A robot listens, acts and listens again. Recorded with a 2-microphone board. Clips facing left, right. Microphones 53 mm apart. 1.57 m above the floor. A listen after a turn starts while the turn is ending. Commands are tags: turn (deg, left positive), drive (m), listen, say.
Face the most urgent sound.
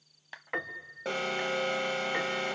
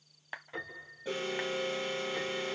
<turn deg="90"/>
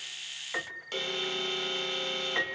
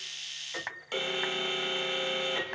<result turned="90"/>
<say>Found it: an alarm, straight ahead.</say>